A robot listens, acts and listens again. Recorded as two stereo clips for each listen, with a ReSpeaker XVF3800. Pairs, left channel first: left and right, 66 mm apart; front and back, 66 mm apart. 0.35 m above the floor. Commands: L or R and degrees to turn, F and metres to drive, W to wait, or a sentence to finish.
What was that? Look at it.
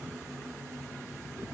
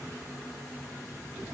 W
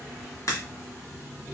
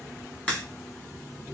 L70
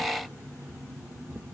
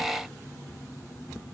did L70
I heard a crack from this way, but can't make it out now.